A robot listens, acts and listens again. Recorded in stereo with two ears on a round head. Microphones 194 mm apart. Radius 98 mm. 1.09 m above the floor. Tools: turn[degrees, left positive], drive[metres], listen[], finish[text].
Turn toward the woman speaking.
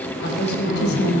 Thought: The woman speaking: about 55° left or 125° left.
Action: turn[55]
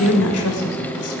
Thought: So it is at 75° left.
Action: turn[75]
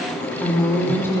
Thought: The woman speaking is now 10° left.
Action: turn[10]
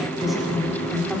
Action: finish[Found it: a woman speaking, straight ahead, 2 to 4 m away.]